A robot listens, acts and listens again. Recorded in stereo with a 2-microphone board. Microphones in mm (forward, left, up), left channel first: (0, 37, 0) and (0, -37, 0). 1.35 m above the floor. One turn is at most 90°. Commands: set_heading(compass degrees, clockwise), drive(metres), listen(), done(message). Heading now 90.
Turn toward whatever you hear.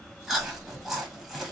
set_heading(120)
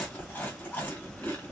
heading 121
set_heading(96)
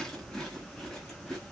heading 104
done("Facing the chewing.")